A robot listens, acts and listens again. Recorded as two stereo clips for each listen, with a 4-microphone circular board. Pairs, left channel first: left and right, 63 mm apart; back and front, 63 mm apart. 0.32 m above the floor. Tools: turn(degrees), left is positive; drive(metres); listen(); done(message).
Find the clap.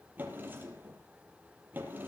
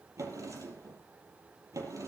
listen()
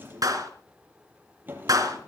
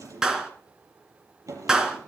turn(degrees=-80)
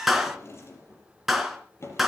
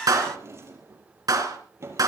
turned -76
done("Facing the clap, 2 to 4 m away.")